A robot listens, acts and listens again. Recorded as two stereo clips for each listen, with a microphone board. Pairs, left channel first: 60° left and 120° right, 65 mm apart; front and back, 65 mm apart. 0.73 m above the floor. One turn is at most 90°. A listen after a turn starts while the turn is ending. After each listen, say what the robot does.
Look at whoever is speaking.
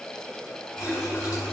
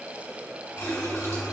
Keep listening.
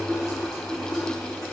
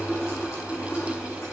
Keep listening.
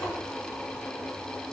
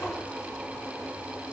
I can't make out anyone speaking, only a running tap.